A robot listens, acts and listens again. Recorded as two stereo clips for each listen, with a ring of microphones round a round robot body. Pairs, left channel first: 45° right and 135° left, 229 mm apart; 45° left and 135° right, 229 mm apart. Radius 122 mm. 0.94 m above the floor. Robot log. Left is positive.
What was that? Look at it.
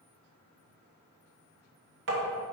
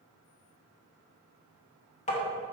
note: The tapping: 100° left.
cmd yaw +100
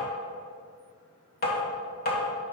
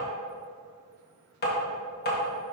end: Facing the tapping.